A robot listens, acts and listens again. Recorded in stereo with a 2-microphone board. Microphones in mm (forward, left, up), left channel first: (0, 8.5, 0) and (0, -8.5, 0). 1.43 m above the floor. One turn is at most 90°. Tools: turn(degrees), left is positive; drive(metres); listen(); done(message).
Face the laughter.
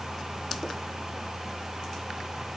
listen()
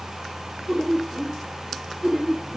turn(degrees=-60)
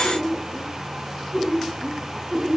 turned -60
turn(degrees=-10)
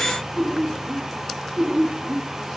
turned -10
done("Facing the laughter, over 4 m away.")